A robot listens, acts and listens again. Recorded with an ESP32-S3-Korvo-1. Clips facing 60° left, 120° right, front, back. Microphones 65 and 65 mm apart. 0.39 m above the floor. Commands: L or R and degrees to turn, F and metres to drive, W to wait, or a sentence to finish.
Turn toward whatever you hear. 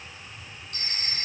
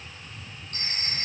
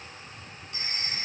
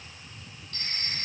R75
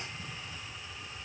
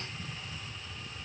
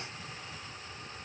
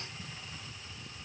W
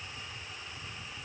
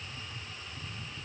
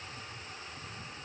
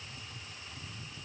W
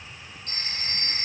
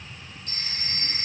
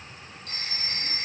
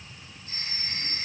L15
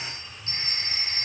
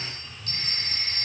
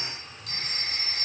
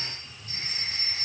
Facing the phone ringing.